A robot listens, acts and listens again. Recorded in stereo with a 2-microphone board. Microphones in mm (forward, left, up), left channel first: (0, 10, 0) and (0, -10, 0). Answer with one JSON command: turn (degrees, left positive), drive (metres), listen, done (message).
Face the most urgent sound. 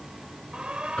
{"turn": -55}
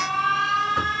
{"done": "Facing the alarm."}